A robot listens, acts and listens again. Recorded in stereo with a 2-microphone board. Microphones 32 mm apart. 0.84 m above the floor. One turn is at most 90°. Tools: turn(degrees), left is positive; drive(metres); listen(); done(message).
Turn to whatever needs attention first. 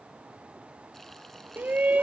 turn(degrees=-65)
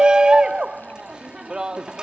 turn(degrees=-25)
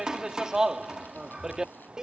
turn(degrees=-20)
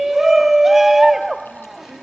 done("Facing the shout.")